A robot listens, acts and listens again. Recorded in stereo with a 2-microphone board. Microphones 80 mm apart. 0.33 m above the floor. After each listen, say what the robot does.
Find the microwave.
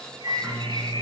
Turn 50° right.
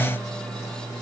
Turn 80° right.
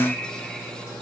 Turn 30° right.
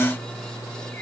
Turn 10° right.
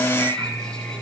Facing the microwave.